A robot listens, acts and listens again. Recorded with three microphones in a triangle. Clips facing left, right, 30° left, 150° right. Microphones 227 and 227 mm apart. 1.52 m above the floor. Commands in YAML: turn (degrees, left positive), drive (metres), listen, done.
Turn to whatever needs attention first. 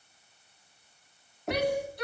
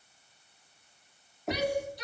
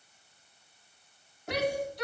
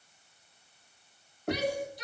turn: 55
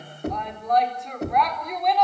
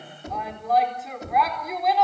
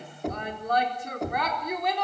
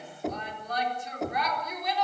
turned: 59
done: "Facing the shout, over 4 m away."